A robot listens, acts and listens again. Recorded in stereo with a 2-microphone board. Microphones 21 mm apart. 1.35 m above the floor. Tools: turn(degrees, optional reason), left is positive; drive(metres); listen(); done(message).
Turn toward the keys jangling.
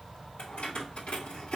turn(degrees=90)
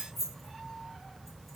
done("Facing the keys jangling.")